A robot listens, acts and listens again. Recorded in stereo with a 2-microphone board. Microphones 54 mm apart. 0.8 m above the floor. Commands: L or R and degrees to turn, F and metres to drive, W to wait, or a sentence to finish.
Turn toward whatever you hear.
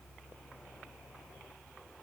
W
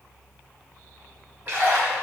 R35
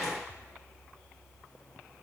W
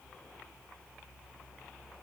I heard a splash, but can't make it out now. It was about straight ahead or 110° right.